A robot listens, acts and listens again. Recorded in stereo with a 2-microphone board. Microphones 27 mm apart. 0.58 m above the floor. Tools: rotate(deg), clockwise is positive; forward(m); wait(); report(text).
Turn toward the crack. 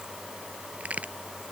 rotate(65)
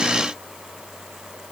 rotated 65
wait()
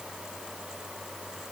report("I heard a crack, but can't make it out now. It was about straight ahead or 50° right.")